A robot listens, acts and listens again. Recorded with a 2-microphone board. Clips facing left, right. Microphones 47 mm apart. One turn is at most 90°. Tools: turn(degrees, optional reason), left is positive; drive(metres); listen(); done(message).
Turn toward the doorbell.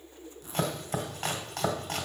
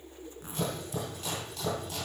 listen()
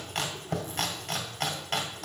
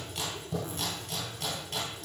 listen()
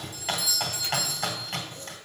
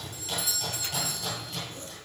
turn(degrees=-55, reason="The doorbell: about 55° right or 125° right.")
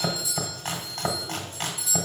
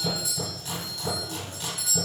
turn(degrees=-55, reason="So it is at 55° right.")
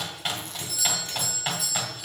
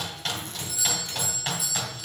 done("Facing the doorbell.")